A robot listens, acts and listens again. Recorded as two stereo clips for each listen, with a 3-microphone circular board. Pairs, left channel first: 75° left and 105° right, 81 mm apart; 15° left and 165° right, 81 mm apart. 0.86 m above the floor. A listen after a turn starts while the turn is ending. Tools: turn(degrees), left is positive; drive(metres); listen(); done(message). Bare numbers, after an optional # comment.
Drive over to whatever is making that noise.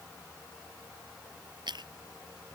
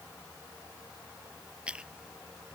# The chewing: 90° right.
turn(-90)
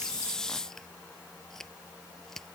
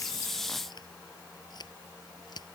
# The chewing is now 10° right.
turn(-10)
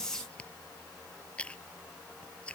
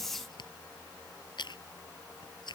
drive(1.0)
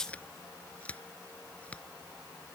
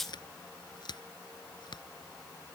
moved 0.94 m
drive(1.0)
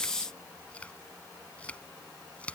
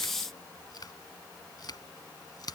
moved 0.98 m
drive(1.0)
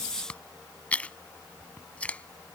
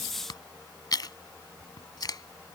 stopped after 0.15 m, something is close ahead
done("Arrived at the chewing, straight ahead.")